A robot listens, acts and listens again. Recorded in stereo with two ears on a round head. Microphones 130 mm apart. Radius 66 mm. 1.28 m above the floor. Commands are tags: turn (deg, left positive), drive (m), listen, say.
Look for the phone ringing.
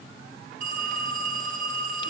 <turn deg="-55"/>
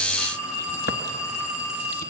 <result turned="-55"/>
<say>Found it: a phone ringing, straight ahead.</say>